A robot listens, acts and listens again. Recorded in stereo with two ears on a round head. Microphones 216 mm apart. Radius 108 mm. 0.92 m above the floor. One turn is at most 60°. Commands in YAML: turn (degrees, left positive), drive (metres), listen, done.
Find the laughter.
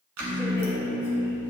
turn: 30
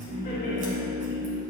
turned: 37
turn: 60
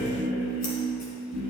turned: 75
turn: 60
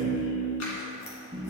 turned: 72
done: "Facing the laughter."